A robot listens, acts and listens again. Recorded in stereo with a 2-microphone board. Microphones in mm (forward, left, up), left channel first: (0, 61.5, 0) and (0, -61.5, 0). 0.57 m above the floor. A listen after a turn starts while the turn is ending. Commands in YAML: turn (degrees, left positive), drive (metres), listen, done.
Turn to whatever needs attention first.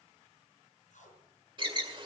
turn: -40
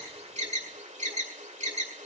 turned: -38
turn: -100
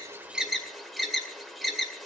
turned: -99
done: "Facing the alarm, 1 to 2 m away."